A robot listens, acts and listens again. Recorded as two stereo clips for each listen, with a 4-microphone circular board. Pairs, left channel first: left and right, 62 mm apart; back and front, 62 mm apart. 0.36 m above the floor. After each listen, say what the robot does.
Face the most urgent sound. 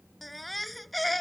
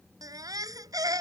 Facing the baby crying.